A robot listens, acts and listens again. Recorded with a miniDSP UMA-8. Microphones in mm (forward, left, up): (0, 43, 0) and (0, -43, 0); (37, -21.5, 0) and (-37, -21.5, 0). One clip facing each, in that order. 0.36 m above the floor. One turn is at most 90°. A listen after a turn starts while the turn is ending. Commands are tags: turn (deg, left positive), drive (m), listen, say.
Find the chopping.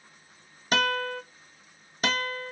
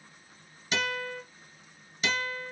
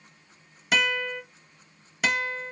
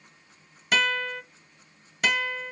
<listen/>
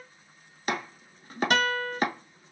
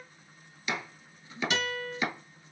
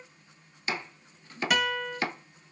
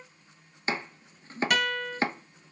<turn deg="90"/>
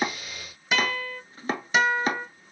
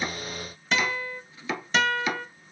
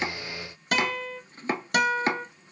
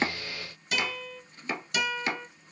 <turn deg="45"/>
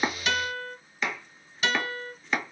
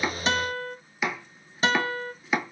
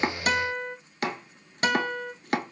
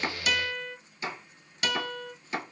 <say>Facing the chopping, 1 to 2 m away.</say>